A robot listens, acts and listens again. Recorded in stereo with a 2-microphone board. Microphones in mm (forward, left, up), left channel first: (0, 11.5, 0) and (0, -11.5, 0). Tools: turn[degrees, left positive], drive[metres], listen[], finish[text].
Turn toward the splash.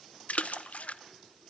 Thought: The splash: about 70° left or 110° left.
Action: turn[70]
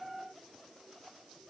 Action: listen[]
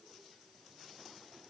Action: finish[I heard a splash, but can't make it out now. It was about straight ahead or 40° left.]